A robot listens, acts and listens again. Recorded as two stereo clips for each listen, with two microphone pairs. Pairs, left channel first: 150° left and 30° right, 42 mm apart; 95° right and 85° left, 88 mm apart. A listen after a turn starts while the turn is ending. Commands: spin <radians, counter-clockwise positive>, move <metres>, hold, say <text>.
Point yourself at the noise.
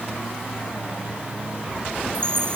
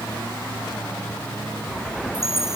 say Found it: a chime, straight ahead.